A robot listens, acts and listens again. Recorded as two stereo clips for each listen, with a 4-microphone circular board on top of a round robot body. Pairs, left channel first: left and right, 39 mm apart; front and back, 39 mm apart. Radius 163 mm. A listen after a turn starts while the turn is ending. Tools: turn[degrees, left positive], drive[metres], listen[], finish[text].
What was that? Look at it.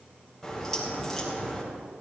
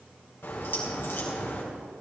Thought: The crack: 10° left.
Action: turn[10]
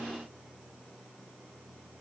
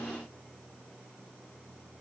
Action: finish[I heard a crack from this way, but can't make it out now.]